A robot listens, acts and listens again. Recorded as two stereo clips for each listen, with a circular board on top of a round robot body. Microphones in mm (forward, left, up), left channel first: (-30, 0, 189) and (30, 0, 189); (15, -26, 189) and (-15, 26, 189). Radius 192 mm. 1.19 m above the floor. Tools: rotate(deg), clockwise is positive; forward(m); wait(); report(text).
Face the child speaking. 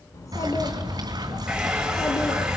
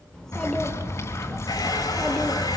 rotate(140)
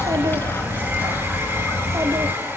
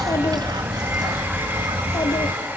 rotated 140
wait()
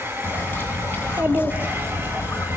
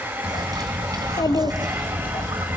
rotate(60)
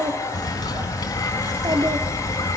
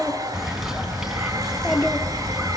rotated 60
rotate(-20)
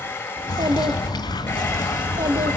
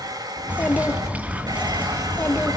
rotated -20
report("Facing the child speaking, 2 to 4 m away.")